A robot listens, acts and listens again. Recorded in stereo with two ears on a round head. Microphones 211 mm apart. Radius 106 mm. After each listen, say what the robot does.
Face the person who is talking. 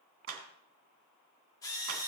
Keep listening.
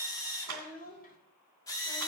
Turn 35° left.
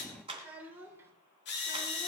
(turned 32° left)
Turn 10° right.
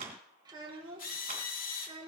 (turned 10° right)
Turn 25° right.
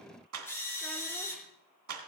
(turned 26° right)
Keep listening.
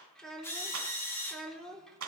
Found it: a child speaking, straight ahead, 2 to 4 m away.